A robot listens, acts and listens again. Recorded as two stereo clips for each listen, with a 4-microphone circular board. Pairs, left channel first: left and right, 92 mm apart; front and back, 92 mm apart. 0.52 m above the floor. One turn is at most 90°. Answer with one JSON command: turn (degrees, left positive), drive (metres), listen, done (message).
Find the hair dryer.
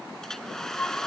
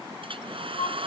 {"turn": 90}
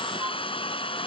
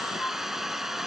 {"turn": 90}
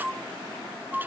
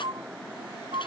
{"listen": true}
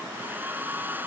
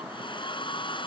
{"turn": -20}
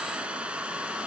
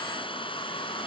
{"turn": -10}
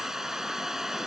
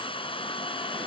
{"done": "Facing the hair dryer."}